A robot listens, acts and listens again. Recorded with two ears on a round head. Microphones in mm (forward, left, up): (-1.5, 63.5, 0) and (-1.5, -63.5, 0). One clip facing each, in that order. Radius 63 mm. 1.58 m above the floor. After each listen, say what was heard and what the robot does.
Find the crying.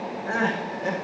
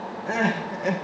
The crying: about 20° right or 160° right. Turn 20° right.
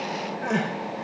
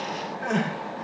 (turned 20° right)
Facing the crying.